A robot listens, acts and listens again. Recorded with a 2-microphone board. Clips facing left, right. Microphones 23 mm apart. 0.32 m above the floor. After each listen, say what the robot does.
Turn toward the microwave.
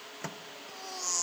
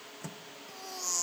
Turn 40° left.
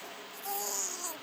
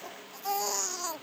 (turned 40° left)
Keep listening.
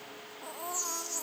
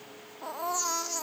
Keep listening.
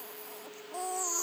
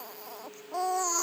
I heard a microwave, but can't make it out now. It was about straight ahead or 100° left.